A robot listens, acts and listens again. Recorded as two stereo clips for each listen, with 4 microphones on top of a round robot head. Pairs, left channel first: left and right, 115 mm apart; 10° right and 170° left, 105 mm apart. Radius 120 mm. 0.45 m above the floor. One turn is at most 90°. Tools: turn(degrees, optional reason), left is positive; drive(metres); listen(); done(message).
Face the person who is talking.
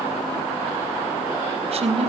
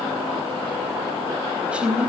turn(degrees=-90, reason="The woman speaking: 105° right.")
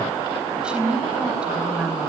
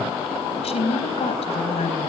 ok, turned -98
turn(degrees=-10, reason="The woman speaking is now 10° right.")
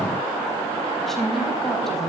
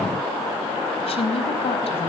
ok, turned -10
done("Found it: a woman speaking, straight ahead, 2 to 4 m away.")